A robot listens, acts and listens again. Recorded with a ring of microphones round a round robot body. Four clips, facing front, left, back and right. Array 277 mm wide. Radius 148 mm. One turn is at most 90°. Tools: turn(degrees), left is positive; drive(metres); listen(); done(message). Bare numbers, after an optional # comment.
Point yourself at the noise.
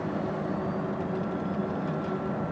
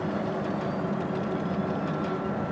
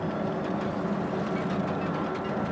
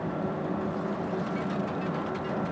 listen()
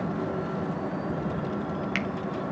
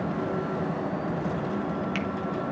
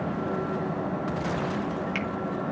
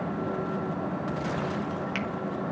done("Found it: a finger snap, straight ahead, 1 to 2 m away.")